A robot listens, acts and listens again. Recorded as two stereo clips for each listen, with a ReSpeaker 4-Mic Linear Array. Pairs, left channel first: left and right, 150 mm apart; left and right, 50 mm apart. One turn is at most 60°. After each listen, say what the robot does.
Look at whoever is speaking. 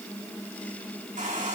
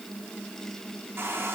Keep listening.
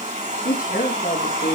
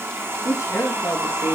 Turn 60° left.
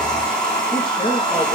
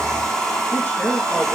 Turn 30° left.
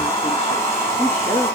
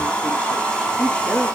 Turn 20° left.
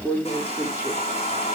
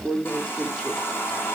Turn 10° right.
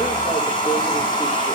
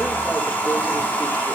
Keep listening.
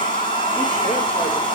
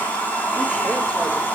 Keep listening.
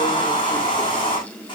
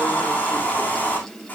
I heard a woman speaking from this way, but can't make it out now.